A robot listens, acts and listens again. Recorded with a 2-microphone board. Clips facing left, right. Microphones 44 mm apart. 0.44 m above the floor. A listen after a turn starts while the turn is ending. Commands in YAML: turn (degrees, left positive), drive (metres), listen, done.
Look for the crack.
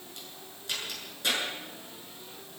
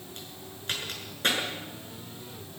turn: -45
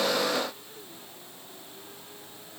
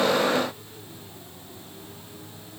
listen: true
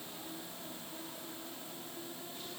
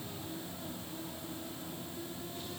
done: "I heard a crack, but can't make it out now. It was about straight ahead or 90° right."